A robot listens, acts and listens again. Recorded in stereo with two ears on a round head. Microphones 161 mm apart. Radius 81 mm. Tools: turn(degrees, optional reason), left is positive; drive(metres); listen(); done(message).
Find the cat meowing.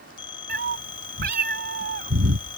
turn(degrees=-60, reason="The cat meowing: about 60° right or 120° right.")
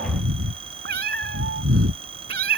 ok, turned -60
turn(degrees=-55, reason="So it is at 55° right.")
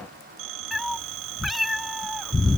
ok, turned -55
done("Facing the cat meowing.")